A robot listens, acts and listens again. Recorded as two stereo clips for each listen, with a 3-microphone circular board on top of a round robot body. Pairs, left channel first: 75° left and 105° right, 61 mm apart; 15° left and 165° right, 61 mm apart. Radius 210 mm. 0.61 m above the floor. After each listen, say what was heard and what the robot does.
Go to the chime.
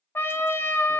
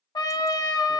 Keep listening.
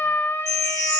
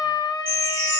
The chime: 110° right. Turn 110° right.
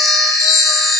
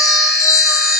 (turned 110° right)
The chime is now 15° right. Turn 15° right.
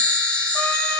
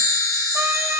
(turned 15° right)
Drive 1.0 m forward.
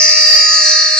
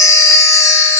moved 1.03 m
Drive 1.0 m forward.
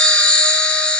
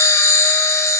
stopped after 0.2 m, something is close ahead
I am next to the chime.